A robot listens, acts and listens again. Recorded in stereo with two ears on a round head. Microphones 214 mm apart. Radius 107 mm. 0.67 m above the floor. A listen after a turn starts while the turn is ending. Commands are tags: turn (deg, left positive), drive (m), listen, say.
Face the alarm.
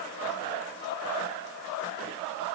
<listen/>
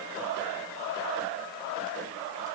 <listen/>
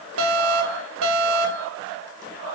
<turn deg="-65"/>
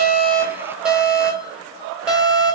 <say>Found it: an alarm, straight ahead.</say>